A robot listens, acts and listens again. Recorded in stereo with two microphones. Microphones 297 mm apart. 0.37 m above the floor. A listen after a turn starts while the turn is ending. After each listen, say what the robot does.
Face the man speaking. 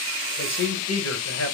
Turn 60° left.
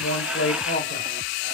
Turn 45° left.
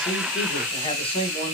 Turn 20° left.
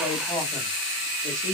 Turn 15° left.
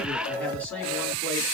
Facing the man speaking, 2 to 4 m away.